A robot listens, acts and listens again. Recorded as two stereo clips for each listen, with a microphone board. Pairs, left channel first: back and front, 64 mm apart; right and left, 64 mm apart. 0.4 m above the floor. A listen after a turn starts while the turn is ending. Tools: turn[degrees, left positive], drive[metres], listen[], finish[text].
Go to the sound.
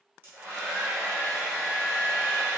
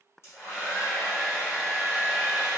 Thought: The hair dryer: 50° right.
Action: turn[-50]
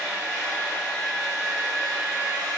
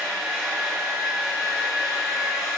Action: drive[1.0]
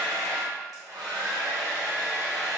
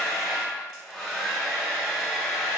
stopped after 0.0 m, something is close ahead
Action: finish[Something is in my way. I am facing the hair dryer but have not reached it.]